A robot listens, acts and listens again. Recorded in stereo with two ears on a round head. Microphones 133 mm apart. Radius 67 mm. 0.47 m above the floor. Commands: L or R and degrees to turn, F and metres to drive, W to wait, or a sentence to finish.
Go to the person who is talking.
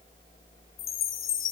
W
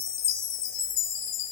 W
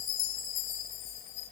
I can't make out anyone speaking, only a chime.